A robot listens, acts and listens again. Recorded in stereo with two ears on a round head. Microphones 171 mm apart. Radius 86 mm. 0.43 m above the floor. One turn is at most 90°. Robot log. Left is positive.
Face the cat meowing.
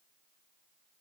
cmd idle
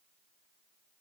cmd idle
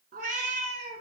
note: The cat meowing: about 35° right or 145° right.
cmd yaw -35
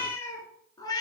note: So it is at 20° left.
cmd yaw +20
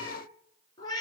note: The cat meowing is now 20° left.
cmd yaw +20
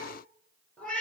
end: Facing the cat meowing, 2 to 4 m away.